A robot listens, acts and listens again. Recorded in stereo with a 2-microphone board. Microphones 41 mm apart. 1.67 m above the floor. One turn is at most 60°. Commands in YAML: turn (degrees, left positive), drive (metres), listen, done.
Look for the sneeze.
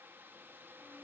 listen: true
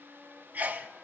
turn: -45
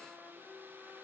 listen: true
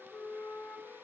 done: "I heard a sneeze, but can't make it out now. It was about straight ahead or 90° right."